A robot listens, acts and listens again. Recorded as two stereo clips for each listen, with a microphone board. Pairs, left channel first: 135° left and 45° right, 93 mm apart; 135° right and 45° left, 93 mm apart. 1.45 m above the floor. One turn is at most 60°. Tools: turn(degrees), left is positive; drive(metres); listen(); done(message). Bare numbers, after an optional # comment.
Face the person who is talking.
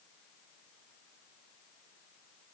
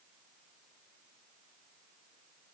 listen()
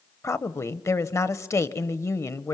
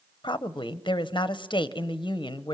# The woman speaking: 165° right.
turn(-60)
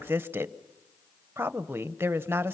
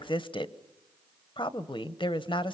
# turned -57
# The woman speaking is now 110° right.
turn(-60)
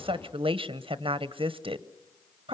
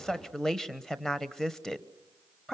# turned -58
# The woman speaking is now 50° right.
turn(-50)
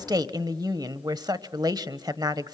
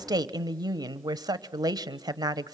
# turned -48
done("Found it: a woman speaking, straight ahead.")